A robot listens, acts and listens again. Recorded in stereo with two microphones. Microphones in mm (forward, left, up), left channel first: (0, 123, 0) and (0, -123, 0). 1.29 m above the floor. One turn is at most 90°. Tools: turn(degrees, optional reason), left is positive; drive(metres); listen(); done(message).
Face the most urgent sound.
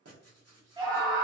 turn(degrees=-15, reason="The scream: about 15° right or 165° right.")
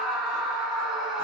done("Facing the scream.")